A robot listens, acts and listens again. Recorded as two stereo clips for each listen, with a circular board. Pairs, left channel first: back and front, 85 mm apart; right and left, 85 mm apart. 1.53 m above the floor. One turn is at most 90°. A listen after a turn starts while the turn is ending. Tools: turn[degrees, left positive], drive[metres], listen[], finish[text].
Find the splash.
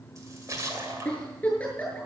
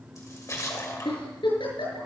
Thought: The splash: 45° right.
Action: turn[-45]
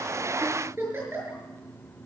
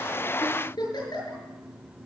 Action: finish[I heard a splash from this way, but can't make it out now.]